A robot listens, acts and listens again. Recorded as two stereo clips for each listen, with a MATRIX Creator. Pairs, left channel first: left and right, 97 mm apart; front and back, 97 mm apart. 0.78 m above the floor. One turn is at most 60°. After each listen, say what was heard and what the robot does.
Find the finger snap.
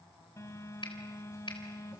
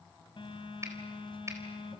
The finger snap: 120° left. Turn 60° left.
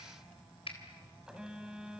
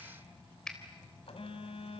The finger snap is now 85° left. Turn 60° left.
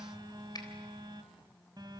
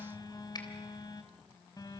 The finger snap is now 45° left. Turn 45° left.
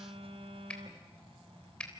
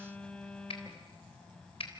The finger snap is now 10° left. Turn 10° left.
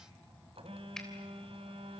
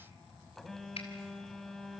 Found it: a finger snap, straight ahead, 2 to 4 m away.